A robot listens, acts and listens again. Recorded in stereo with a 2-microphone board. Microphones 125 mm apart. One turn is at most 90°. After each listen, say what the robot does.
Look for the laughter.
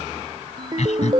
Turn 65° left.
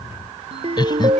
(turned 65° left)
Turn 35° left.
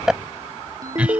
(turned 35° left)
Turn 10° right.
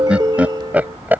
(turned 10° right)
Turn 15° right.
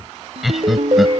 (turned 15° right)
Facing the laughter.